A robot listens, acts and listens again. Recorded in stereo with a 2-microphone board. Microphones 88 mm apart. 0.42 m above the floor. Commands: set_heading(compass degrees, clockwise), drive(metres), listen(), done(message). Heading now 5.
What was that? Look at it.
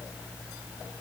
listen()
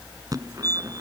set_heading(45)
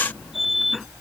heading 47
done("Found it: a fire alarm, straight ahead.")